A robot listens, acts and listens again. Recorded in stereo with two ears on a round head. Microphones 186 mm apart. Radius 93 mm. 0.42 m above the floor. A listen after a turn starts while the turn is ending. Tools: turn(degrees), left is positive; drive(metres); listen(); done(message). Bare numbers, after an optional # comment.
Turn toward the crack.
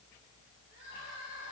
listen()
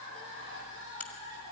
turn(30)
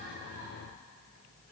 listen()
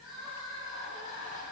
done("I heard a crack, but can't make it out now. It was about 20° right or 140° left.")